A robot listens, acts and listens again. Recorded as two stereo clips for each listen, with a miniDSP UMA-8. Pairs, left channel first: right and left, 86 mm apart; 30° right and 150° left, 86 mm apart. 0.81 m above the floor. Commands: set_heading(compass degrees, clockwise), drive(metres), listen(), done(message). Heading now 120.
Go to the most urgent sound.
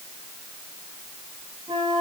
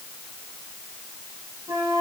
listen()
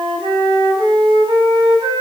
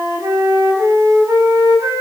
listen()
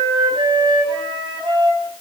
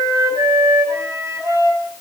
done("I can't make out anything urgent to turn to.")